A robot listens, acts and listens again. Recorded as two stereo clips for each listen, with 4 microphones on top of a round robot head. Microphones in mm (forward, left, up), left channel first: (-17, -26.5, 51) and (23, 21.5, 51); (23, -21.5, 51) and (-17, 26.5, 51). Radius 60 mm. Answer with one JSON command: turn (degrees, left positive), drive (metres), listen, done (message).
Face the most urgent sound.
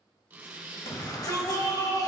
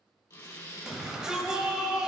{"turn": -150}
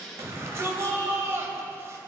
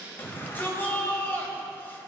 {"done": "Found it: a shout, straight ahead."}